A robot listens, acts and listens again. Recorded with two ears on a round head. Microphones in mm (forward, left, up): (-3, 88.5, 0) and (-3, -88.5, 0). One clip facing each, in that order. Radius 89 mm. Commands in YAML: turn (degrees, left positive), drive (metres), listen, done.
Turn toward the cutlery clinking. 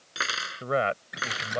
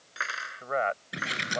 turn: 50
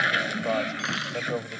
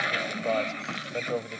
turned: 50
listen: true
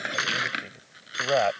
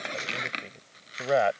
turn: 80
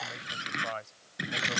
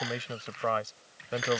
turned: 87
listen: true
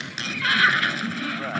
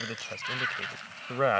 listen: true
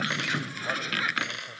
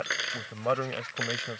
done: "Facing the cutlery clinking."